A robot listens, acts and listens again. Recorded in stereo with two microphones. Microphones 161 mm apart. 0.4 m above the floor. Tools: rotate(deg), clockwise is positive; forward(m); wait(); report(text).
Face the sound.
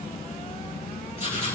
rotate(-45)
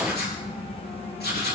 rotate(-90)
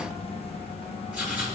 rotate(10)
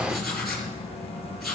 report("Found it: writing, straight ahead.")